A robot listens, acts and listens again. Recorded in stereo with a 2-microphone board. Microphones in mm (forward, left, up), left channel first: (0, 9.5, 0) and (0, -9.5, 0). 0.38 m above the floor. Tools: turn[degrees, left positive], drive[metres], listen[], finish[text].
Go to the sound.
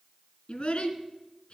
Thought: The child speaking: about 70° left or 110° left.
Action: turn[70]
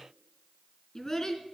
Thought: So it is at 35° left.
Action: turn[35]
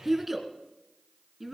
Action: drive[1.0]
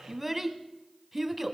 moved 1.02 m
Action: drive[1.0]
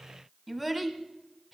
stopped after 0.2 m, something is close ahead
Action: finish[I am next to the child speaking.]